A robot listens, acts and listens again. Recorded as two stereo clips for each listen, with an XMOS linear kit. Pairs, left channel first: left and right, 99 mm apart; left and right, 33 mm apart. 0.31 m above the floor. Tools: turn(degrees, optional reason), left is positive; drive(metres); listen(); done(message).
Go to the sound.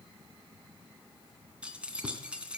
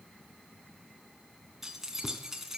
turn(degrees=-30)
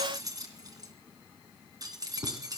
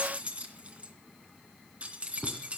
turn(degrees=-140, reason="So it is at 140° right.")
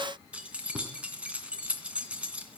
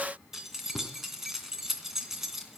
turn(degrees=-10, reason="The keys jangling is now 10° right.")
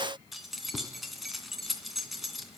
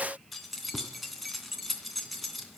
drive(metres=1.0)
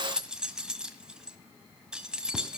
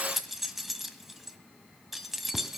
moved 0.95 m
turn(degrees=-10, reason="The keys jangling is now 10° right.")
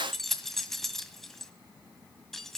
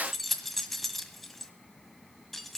drive(metres=1.0)
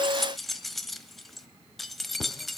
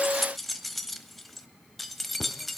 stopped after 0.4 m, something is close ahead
done("Arrived at the keys jangling, straight ahead.")